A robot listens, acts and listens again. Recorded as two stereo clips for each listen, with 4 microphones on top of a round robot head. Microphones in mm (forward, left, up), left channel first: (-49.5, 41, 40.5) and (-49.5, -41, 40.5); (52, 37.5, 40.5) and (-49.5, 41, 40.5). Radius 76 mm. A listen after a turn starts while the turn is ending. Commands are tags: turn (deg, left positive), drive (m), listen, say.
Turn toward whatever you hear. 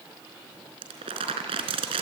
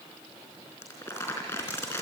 <turn deg="-70"/>
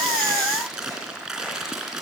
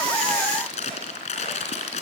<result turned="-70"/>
<say>Facing the crumpling, 2 to 4 m away.</say>